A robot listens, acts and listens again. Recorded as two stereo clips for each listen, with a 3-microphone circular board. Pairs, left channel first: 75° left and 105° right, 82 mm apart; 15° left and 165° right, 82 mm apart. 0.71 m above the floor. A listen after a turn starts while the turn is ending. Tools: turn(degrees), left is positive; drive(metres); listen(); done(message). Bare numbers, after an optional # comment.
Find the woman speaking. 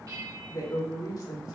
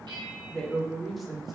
# The woman speaking: 110° left.
turn(110)
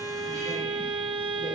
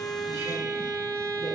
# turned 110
listen()
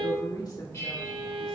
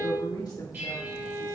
# The woman speaking is now 45° left.
turn(45)
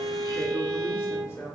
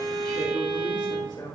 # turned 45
# The woman speaking is now 20° left.
turn(20)
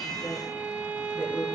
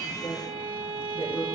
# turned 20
done("Found it: a woman speaking, straight ahead.")